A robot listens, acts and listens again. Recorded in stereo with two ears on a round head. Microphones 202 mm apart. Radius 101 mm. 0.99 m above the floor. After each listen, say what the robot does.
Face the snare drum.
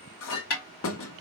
Turn 60° left.
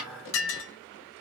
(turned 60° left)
Facing the snare drum.